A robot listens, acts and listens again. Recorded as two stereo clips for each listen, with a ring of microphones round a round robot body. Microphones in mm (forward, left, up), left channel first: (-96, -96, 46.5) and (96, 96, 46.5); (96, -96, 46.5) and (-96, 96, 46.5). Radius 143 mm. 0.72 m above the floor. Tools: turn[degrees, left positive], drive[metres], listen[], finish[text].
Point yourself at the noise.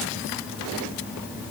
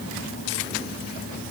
Action: listen[]
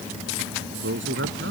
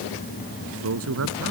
Thought: The man speaking: 95° left.
Action: turn[95]
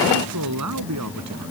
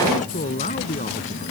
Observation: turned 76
Thought: The man speaking is now 20° left.
Action: turn[20]
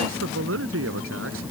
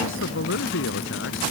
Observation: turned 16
Action: finish[Facing the man speaking.]